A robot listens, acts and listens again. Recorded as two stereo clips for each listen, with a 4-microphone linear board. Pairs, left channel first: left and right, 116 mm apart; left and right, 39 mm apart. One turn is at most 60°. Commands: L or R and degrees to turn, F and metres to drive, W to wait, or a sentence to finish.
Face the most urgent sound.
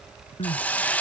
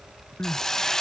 L60
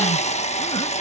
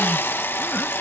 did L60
W
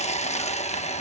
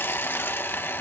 W
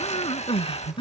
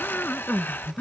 L50
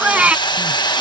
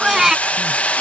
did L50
R10
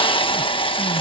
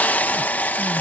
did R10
W
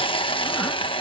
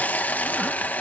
W
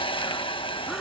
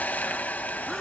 Facing where the crying came from. I can't hear it now.